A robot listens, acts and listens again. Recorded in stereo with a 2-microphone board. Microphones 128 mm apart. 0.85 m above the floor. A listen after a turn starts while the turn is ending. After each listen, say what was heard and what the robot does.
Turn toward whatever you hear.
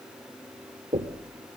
The knocking: about 60° right or 120° right. Turn 60° right.
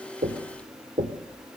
So it is at 65° right. Turn 65° right.
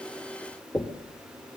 The knocking is now 25° left. Turn 25° left.
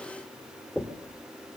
Facing the knocking, 1 to 2 m away.